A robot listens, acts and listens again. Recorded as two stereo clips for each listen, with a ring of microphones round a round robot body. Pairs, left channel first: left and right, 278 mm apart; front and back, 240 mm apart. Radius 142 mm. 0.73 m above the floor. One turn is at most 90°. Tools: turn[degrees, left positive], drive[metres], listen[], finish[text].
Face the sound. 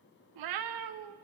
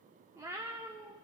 Thought: The cat meowing: 100° right.
Action: turn[-90]
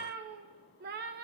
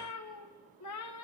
Thought: The cat meowing is now 30° right.
Action: turn[-30]
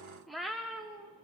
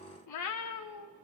Action: finish[Facing the cat meowing, under 1 m away.]